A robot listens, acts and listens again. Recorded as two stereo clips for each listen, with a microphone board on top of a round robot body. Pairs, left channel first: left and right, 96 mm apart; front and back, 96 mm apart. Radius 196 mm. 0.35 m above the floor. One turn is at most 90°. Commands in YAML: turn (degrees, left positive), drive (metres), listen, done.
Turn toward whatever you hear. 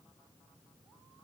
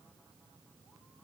listen: true
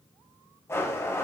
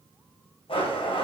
turn: 25
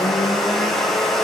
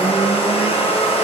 done: "Found it: a blender, straight ahead, 1 to 2 m away."